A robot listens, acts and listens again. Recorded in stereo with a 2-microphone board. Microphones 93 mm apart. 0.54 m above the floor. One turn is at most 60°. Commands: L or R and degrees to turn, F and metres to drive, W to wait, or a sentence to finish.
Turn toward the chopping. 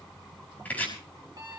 L15
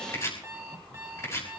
L60
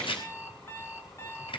L60
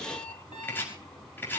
L25
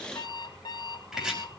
Found it: chopping, straight ahead, over 4 m away.